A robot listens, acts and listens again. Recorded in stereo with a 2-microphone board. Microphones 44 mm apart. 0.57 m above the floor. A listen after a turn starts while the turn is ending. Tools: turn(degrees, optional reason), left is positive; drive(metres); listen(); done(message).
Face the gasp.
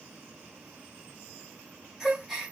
turn(degrees=-30)
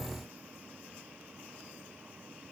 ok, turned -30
listen()
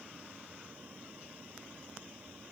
done("I heard a gasp, but can't make it out now. It was about 25° left or 145° right.")